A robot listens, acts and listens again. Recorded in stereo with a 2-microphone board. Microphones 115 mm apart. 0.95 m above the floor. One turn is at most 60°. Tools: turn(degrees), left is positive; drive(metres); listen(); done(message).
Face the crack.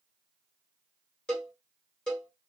listen()
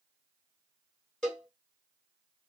listen()
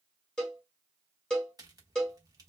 turn(degrees=-35)
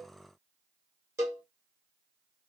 listen()
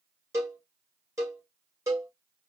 done("I heard a crack, but can't make it out now. It was about straight ahead or 110° right.")